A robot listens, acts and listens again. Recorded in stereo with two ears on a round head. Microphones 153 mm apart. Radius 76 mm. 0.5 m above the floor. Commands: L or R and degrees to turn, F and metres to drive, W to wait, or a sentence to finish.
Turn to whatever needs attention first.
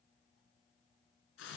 W
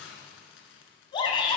L30
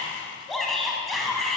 Facing the shout.